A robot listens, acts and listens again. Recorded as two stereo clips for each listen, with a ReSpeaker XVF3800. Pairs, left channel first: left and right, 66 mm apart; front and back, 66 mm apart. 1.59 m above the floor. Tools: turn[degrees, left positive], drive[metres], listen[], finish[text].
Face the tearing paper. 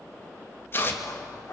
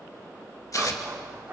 Thought: The tearing paper: 35° left.
Action: turn[35]
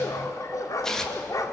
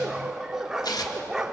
Thought: The tearing paper is now 10° left.
Action: turn[10]
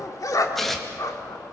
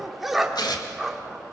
Action: finish[Found it: tearing paper, straight ahead.]